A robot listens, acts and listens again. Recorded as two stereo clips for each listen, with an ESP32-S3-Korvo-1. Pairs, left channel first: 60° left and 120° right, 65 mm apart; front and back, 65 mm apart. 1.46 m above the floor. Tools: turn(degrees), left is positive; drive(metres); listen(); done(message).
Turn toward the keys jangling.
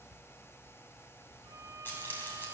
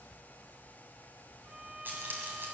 turn(degrees=120)
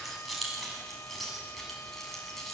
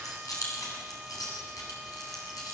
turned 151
turn(degrees=-25)
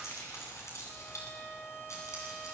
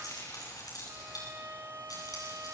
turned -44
turn(degrees=20)
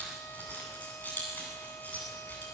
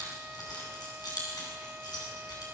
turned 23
done("Found it: keys jangling, straight ahead, over 4 m away.")